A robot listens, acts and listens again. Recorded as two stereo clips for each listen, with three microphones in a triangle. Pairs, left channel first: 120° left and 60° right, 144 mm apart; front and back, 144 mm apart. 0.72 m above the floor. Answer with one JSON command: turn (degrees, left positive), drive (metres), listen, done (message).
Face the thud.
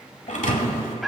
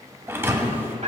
{"turn": 110}
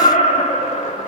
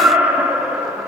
{"done": "I heard a thud from this way, but can't make it out now."}